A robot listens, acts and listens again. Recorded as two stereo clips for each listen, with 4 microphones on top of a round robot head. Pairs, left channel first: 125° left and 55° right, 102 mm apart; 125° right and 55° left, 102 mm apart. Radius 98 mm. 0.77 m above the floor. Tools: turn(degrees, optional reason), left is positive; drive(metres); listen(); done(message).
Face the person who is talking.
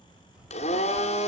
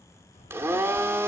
turn(degrees=-135, reason="The child speaking: 135° right.")
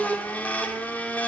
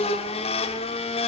listen()
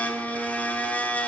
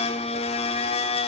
listen()
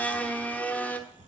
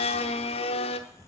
turn(degrees=-55, reason="The child speaking is now 55° right.")
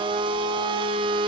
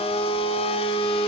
listen()
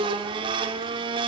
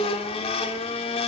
listen()
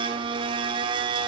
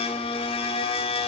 done("Facing where the child speaking came from. I can't hear it now.")